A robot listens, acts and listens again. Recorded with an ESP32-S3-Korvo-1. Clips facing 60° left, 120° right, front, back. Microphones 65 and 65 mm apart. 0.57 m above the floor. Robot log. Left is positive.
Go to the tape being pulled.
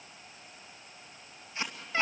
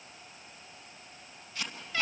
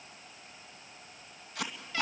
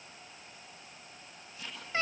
cmd fwd 1.0
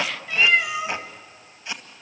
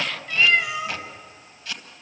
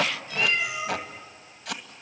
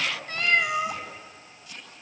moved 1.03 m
note: The tape being pulled is now 10° right.
cmd yaw -10
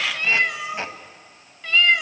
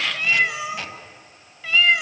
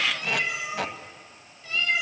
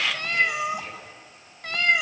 cmd fwd 1.0
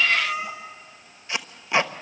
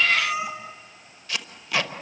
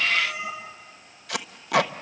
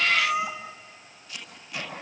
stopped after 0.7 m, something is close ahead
note: The tape being pulled is now 10° right.
cmd yaw -10
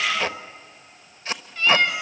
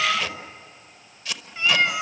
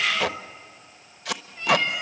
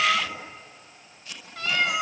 end: Arrived at the tape being pulled, straight ahead.